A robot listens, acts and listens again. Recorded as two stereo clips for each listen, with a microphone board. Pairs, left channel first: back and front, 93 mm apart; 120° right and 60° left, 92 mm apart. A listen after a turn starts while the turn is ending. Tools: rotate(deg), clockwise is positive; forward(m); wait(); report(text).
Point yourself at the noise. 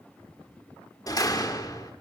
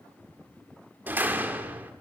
rotate(-130)
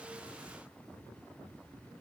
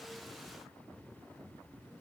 report("Facing where the door slam came from. I can't hear it now.")